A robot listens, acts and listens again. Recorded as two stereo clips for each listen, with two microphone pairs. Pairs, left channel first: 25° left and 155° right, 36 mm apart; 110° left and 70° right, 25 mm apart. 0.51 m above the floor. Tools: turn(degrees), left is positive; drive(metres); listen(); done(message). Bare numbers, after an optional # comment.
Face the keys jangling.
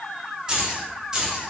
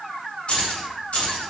# The keys jangling: 135° left.
turn(135)
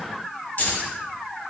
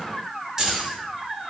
# The keys jangling is now 10° right.
turn(-10)
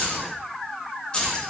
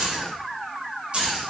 # The keys jangling is now 40° right.
turn(-40)
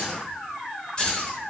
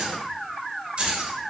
# The keys jangling is now 35° right.
turn(-35)
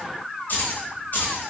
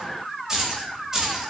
done("Found it: keys jangling, straight ahead, 1 to 2 m away.")